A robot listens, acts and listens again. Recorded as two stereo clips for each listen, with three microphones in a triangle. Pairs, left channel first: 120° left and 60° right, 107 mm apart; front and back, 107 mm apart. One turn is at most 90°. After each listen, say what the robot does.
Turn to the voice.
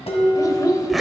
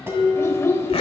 Turn 65° left.
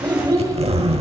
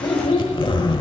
Facing the child speaking, 1 to 2 m away.